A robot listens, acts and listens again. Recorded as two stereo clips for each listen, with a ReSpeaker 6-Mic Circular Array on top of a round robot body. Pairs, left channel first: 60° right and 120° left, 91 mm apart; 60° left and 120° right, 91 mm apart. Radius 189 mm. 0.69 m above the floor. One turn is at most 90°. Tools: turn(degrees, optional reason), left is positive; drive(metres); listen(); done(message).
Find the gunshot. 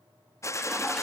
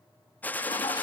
turn(degrees=-10, reason="The gunshot: 10° right.")
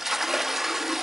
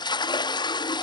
done("Facing where the gunshot came from. I can't hear it now.")